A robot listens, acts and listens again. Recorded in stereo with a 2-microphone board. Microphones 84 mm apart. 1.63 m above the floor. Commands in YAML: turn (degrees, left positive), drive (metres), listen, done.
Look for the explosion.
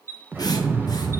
turn: -25
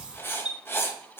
listen: true
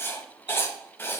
done: "I heard an explosion, but can't make it out now. It was about straight ahead or 130° right."